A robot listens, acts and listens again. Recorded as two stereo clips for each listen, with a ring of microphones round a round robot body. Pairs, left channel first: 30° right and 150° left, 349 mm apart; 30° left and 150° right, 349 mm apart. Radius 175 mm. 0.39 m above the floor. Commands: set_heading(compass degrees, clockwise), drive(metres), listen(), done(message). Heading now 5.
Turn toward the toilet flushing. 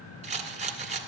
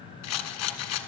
listen()
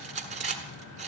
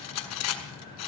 listen()
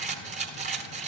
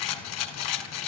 done("I can't make out a toilet flushing to turn to.")